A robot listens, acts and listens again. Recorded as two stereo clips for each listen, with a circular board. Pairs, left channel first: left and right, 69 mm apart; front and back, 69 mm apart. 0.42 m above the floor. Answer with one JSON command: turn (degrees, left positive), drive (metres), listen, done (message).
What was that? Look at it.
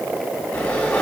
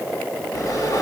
{"turn": 20}
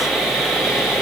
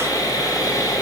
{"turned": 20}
{"done": "Found it: sawing, straight ahead, 2 to 4 m away."}